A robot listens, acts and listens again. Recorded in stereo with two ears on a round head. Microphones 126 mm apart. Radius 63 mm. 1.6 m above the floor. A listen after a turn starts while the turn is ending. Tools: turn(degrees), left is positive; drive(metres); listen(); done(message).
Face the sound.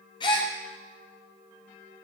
turn(degrees=35)
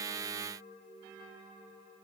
listen()
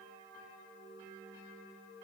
done("I heard a gasp, but can't make it out now. It was about straight ahead or 110° left.")